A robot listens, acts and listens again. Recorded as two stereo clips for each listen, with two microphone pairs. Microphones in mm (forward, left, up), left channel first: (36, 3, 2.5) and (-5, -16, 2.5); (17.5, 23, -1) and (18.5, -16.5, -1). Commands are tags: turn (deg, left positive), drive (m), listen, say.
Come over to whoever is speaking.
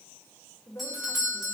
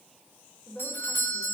<turn deg="35"/>
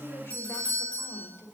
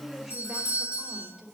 <drive m="1.0"/>
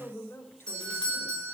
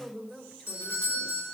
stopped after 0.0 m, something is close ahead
<say>Blocked. The woman speaking is further on, straight ahead.</say>